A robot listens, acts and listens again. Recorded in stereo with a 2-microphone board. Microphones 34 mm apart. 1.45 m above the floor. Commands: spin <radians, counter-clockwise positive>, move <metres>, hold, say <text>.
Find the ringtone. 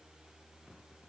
hold
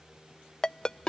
spin 0.44
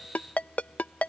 spin 2.27
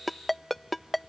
say Found it: a ringtone, straight ahead.